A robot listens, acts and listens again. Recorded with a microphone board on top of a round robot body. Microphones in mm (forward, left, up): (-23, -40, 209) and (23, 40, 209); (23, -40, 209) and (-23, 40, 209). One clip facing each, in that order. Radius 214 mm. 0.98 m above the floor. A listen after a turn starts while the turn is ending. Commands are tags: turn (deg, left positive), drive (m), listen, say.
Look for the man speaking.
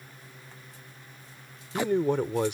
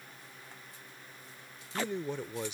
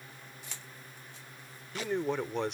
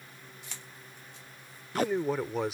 <turn deg="-155"/>
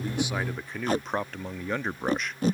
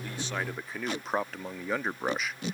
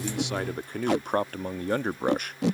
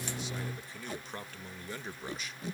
<turn deg="-25"/>
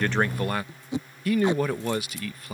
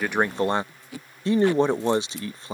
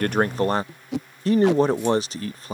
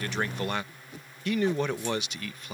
<say>Facing the man speaking.</say>